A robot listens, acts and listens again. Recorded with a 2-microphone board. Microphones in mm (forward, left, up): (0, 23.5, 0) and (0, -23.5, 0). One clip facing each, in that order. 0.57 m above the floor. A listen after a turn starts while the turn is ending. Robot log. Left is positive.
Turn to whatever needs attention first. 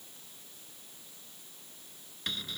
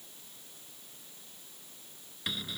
cmd idle
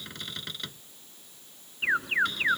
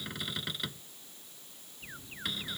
cmd yaw +90
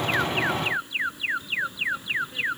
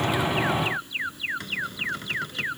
note: So it is at 10° left.
cmd yaw +10
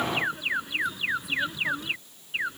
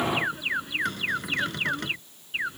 end: Facing the alarm.